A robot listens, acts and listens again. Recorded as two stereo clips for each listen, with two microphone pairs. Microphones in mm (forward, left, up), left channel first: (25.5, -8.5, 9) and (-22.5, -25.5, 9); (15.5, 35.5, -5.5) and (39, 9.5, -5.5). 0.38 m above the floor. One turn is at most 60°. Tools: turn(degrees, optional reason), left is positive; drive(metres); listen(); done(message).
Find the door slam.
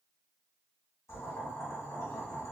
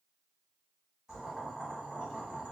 listen()
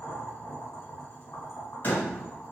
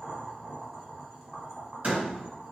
turn(degrees=-25, reason="The door slam: 25° right.")
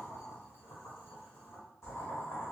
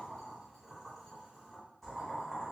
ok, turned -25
done("Facing where the door slam came from. I can't hear it now.")